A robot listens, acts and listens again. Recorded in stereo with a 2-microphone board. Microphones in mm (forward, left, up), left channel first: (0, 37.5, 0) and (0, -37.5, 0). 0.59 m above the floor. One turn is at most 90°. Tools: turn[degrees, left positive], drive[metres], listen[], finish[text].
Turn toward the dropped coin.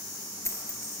Thought: The dropped coin: about 45° left or 135° left.
Action: turn[45]
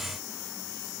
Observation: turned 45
Action: listen[]
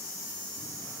Action: finish[I heard a dropped coin, but can't make it out now. It was about straight ahead or 90° left.]